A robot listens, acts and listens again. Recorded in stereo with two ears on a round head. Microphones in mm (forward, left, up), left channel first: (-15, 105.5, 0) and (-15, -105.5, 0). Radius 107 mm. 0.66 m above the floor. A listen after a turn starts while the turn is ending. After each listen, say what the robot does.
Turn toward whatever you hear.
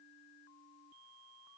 Keep listening.
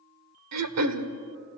Turn 75° right.
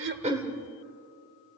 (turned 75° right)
Keep listening.
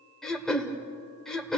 Found it: throat clearing, straight ahead.